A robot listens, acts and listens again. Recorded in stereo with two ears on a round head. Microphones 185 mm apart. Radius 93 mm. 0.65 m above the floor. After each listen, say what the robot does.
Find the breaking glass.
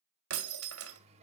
Turn 90° right.
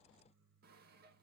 I heard breaking glass from this way, but can't make it out now.